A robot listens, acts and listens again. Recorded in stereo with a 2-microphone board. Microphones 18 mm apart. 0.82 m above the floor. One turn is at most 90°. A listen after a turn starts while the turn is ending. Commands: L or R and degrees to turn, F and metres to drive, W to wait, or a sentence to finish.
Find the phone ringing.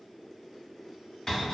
W
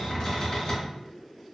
W
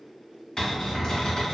I can't make out a phone ringing, only a cupboard door.